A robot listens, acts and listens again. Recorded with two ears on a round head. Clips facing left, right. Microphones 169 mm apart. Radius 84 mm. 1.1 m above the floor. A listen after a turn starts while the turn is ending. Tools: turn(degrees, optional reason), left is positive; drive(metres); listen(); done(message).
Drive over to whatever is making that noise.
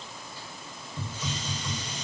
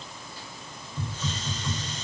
turn(degrees=30)
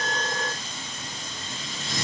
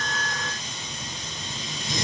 turn(degrees=-15, reason="So it is at 15° right.")
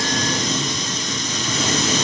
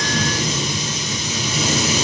turn(degrees=-10, reason="The hiss is now 10° right.")
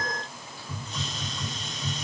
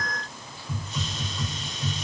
drive(metres=1.0)
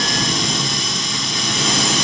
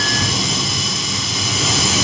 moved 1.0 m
drive(metres=1.0)
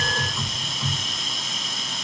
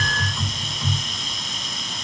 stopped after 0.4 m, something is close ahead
done("Arrived at the hiss, straight ahead.")